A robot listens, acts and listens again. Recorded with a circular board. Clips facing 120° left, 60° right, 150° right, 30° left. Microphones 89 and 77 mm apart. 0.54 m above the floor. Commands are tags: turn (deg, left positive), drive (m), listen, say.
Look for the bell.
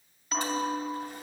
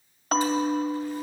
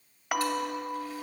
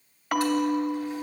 <turn deg="-65"/>
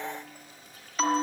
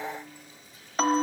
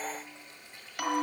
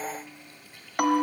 <turn deg="-15"/>
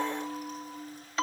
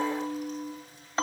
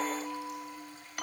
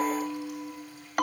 <say>Found it: a bell, straight ahead.</say>